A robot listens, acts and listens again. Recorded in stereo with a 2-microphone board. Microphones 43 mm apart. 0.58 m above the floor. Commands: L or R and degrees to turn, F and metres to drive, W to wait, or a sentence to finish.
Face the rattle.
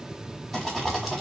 R30
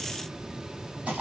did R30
R145
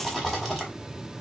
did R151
Found it: a rattle, straight ahead, 1 to 2 m away.